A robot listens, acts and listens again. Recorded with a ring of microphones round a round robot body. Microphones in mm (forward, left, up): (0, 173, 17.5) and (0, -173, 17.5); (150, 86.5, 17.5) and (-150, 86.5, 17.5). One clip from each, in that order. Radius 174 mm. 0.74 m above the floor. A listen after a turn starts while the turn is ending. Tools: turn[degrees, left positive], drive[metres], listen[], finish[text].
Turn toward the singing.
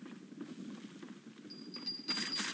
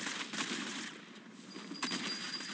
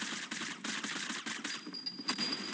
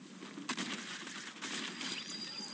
Action: listen[]
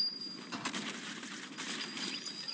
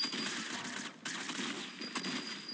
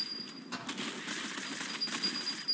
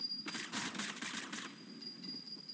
Action: listen[]
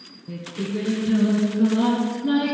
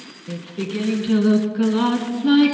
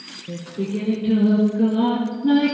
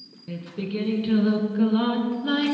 Thought: The singing: 125° right.
Action: turn[-125]
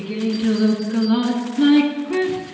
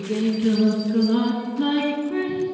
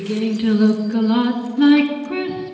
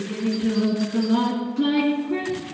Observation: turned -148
Thought: The singing is now 25° left.
Action: turn[25]
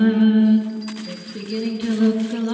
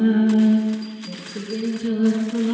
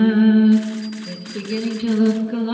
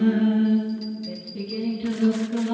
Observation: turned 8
Thought: The singing is now 20° left.
Action: turn[20]
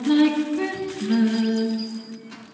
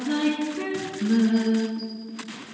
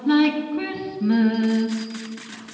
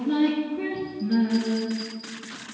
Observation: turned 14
Action: finish[Facing the singing.]